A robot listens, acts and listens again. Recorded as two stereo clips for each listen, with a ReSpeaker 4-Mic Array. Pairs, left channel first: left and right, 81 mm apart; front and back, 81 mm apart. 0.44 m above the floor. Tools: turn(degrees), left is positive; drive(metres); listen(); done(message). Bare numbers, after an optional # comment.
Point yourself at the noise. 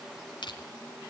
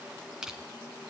# The crushing: 100° left.
turn(100)
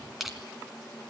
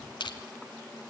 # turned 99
done("Facing the crushing, 2 to 4 m away.")